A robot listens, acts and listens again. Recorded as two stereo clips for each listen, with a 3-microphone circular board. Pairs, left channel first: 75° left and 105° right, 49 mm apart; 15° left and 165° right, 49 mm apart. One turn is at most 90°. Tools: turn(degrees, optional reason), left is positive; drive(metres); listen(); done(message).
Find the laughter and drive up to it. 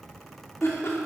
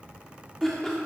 turn(degrees=90, reason="The laughter: 95° left.")
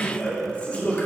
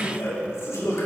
turn(degrees=10, reason="The laughter is now 10° left.")
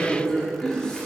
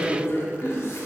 drive(metres=1.0)
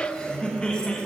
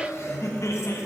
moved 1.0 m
drive(metres=1.0)
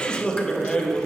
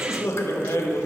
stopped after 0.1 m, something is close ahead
done("I am next to the laughter.")